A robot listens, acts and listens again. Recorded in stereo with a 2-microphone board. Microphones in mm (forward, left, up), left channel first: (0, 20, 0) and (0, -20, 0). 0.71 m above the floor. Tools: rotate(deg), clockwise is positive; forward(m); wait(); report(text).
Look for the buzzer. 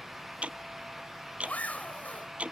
wait()
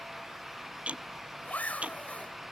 wait()
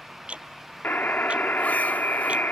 rotate(-55)
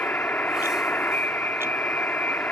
rotate(-60)
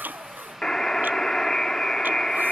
rotate(-15)
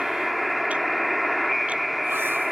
report("Found it: a buzzer, straight ahead.")